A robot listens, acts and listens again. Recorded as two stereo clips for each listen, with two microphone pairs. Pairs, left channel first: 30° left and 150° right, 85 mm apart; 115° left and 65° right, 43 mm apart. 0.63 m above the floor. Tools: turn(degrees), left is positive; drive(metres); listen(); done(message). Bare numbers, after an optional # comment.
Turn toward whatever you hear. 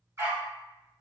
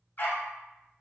# The dog barking: 155° left.
turn(155)
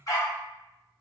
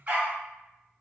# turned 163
# The dog barking is now 10° right.
turn(-10)
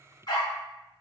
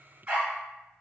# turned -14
done("Found it: a dog barking, straight ahead.")